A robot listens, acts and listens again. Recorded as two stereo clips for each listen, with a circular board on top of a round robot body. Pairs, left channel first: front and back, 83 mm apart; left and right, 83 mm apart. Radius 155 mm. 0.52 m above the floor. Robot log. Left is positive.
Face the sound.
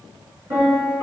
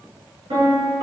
note: The piano: 120° right.
cmd yaw -120
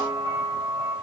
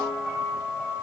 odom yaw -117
end: Facing the piano.